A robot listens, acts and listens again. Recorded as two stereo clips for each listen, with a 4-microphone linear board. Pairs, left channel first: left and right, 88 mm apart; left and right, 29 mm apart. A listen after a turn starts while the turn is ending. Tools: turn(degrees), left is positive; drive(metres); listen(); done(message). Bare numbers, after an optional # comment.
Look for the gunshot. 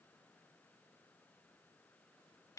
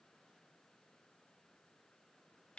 listen()
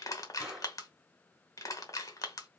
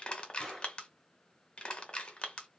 turn(-30)
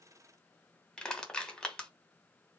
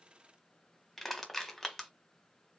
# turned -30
listen()
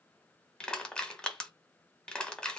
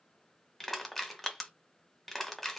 done("I heard a gunshot, but can't make it out now. It was about 25° left or 145° right.")